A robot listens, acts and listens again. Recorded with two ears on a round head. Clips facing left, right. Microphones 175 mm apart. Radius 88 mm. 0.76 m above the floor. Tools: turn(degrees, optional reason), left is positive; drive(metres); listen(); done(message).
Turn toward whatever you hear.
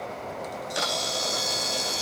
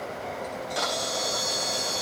turn(degrees=25, reason="The camera shutter: about 25° left or 155° left.")
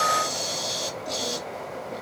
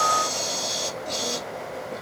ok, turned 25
done("Facing the camera shutter, under 1 m away.")